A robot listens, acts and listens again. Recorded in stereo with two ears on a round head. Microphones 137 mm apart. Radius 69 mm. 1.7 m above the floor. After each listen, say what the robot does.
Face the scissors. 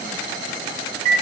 Keep listening.
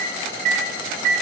Keep listening.
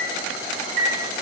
I can't make out scissors to turn to.